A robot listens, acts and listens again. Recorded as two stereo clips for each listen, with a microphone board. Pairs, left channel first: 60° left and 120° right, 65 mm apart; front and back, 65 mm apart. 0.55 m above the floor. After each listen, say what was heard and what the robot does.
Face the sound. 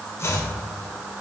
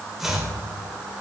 The chopping: 95° left. Turn 95° left.
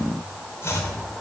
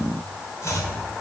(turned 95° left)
The chopping is now 25° left. Turn 25° left.
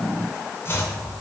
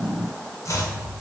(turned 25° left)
The chopping is now 20° left. Turn 20° left.
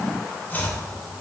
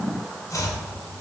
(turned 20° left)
Facing the chopping.